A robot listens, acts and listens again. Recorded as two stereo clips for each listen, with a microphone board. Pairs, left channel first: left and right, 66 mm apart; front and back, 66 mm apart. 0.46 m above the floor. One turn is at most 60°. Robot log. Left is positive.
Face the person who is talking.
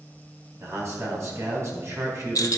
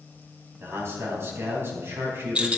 note: The man speaking: 130° right.
cmd yaw -60
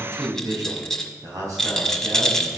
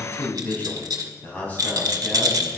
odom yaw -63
note: The man speaking is now 65° right.
cmd yaw -60
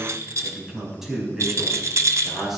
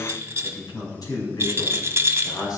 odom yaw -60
end: Found it: a man speaking, straight ahead.